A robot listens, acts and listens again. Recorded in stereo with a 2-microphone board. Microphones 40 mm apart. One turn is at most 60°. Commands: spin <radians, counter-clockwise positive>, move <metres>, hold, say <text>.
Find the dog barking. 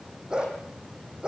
spin -0.44
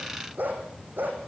spin -1.05
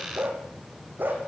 spin -1.05
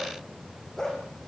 spin 0.26
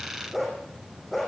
say Facing the dog barking.